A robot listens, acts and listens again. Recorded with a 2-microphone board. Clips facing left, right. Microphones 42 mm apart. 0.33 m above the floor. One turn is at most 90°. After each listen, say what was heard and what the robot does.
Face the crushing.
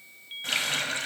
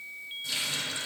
Keep listening.
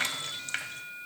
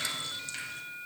Keep listening.
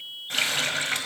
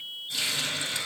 I can't make out crushing, only a running tap.